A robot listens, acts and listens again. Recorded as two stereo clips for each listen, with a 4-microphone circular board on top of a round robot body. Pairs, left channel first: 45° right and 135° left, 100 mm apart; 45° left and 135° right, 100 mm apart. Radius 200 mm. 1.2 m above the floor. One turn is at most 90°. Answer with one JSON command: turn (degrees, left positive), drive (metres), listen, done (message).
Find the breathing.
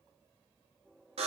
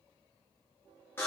{"listen": true}
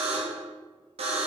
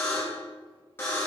{"listen": true}
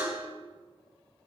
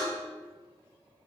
{"done": "I can't make out breathing to turn to."}